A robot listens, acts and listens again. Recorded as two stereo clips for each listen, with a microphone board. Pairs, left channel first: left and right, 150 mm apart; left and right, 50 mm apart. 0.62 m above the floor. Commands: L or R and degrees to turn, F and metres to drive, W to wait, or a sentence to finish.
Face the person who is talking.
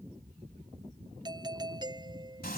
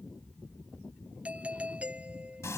W
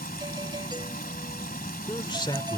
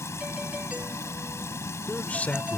L30
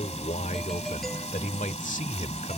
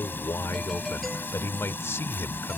L120
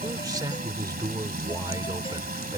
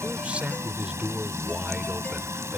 R25
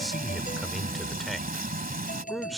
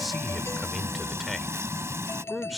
Found it: a man speaking, straight ahead.